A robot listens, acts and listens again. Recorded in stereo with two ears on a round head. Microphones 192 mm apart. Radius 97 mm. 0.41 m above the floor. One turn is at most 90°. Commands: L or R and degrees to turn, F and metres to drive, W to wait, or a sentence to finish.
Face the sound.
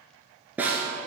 R30
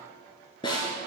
L25
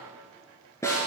L15
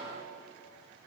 W
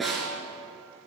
Facing the snare drum.